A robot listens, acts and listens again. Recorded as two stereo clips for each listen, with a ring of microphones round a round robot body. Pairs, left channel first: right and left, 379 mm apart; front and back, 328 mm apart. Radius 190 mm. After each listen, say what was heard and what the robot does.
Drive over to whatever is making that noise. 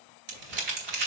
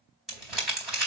The crumpling: 90° left. Turn 90° left.
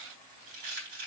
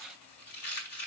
The crumpling is now 30° left. Turn 30° left.
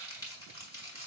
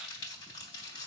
The crumpling is now 10° right. Turn 10° right.
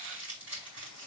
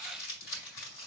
Drive 1.0 m forward.
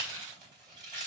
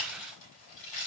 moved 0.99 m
The crumpling is now 10° left. Turn 10° left.
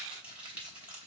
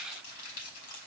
Drive 1.0 m forward.
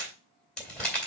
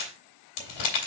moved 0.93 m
Drive 1.0 m forward.
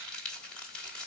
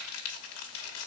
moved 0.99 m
Drive 1.0 m forward.
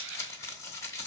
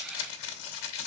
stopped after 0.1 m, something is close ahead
Arrived at the crumpling, straight ahead.